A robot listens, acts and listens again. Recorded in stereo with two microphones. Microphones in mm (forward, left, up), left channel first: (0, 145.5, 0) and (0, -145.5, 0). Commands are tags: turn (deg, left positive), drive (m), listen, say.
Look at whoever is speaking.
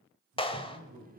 <turn deg="-70"/>
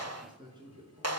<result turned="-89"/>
<turn deg="-15"/>
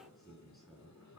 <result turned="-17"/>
<say>Facing the man speaking, over 4 m away.</say>